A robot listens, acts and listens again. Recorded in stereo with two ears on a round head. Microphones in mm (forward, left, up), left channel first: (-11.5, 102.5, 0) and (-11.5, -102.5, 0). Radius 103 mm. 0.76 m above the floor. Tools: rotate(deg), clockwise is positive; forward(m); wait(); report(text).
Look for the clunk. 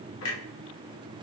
rotate(-70)
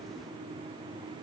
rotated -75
wait()
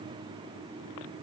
report("I heard a clunk, but can't make it out now. It was about 5° right or 35° left.")